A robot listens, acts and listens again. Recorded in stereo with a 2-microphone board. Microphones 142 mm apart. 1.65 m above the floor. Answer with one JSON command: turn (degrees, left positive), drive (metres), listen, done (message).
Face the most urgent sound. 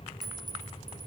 {"listen": true}
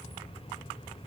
{"listen": true}
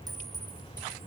{"done": "I can't make out anything urgent."}